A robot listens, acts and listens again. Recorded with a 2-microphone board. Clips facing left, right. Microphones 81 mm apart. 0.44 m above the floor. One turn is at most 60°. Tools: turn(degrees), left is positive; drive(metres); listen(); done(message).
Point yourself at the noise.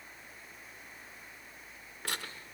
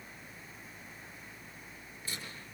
turn(degrees=60)
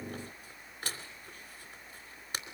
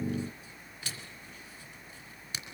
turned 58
turn(degrees=45)
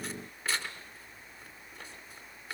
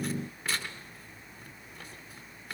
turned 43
done("Found it: tearing paper, straight ahead, 2 to 4 m away.")